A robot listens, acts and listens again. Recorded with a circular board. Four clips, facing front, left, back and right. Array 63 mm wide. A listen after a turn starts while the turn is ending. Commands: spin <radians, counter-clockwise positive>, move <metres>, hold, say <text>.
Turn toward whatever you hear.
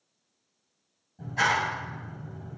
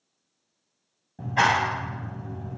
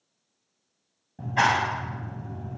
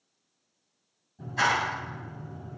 spin 2.27
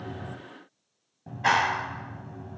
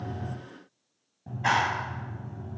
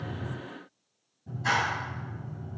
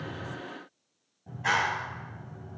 spin 0.44
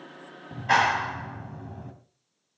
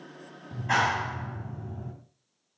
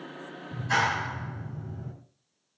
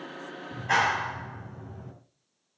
say Found it: a clap, straight ahead.